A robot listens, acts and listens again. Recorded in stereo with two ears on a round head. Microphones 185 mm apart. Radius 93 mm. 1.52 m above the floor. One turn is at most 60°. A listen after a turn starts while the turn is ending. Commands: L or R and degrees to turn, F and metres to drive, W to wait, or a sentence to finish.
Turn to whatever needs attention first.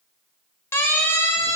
L30
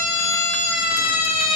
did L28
L60
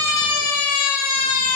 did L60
L60
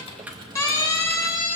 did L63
L15
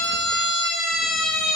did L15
Facing the siren, 2 to 4 m away.